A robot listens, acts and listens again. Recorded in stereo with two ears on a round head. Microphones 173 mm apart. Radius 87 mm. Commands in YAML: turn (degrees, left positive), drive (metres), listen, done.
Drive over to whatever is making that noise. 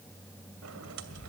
turn: -90
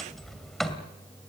drive: 1.0
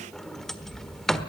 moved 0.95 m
drive: 1.0
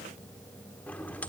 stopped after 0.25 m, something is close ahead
turn: 10
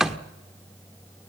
done: "I am next to the sliding door."